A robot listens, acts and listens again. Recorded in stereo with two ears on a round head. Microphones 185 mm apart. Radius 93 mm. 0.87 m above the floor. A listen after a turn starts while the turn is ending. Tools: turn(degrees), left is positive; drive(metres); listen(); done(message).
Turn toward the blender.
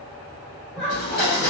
turn(degrees=45)
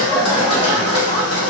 turn(degrees=85)
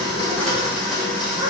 done("Facing the blender.")